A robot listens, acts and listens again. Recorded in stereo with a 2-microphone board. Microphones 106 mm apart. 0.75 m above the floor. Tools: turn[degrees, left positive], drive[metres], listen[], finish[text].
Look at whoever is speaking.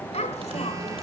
Action: turn[90]
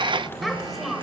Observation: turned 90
Action: finish[Facing the child speaking.]